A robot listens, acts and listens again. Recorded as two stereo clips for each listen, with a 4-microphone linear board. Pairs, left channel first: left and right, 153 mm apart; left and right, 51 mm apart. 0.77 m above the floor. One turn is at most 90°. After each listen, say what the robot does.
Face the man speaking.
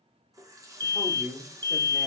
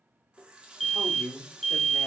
Turn 50° left.
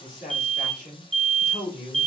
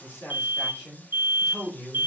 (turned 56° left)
Turn 45° left.
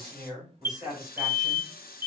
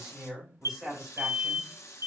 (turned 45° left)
Found it: a man speaking, straight ahead, 2 to 4 m away.